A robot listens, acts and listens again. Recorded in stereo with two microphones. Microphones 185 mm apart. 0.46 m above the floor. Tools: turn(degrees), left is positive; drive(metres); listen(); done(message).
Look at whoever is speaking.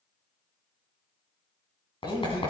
turn(degrees=25)
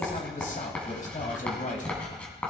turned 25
turn(degrees=130)
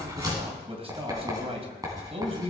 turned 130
turn(degrees=-35)
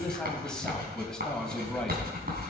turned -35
done("Found it: a man speaking, straight ahead, 2 to 4 m away.")